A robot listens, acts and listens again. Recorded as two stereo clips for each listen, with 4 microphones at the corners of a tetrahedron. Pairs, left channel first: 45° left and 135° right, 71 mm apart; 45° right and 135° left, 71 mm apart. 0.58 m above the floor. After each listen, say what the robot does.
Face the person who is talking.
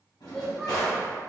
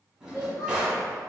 Turn 40° right.
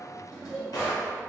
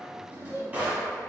Turn 25° right.
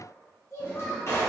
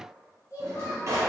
Facing the child speaking, 1 to 2 m away.